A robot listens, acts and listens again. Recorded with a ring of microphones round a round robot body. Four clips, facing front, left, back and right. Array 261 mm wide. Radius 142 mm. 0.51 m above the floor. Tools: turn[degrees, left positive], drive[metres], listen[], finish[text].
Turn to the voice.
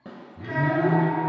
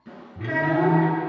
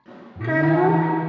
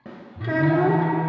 Thought: The child speaking: 160° right.
Action: turn[-160]
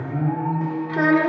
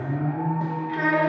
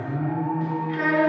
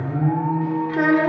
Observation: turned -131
Thought: The child speaking is now 30° right.
Action: turn[-30]
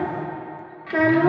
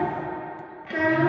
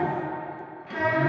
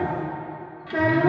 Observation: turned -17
Thought: The child speaking is now 10° right.
Action: turn[-10]
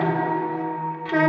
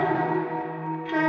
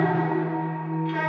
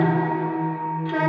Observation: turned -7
Action: finish[Found it: a child speaking, straight ahead, 1 to 2 m away.]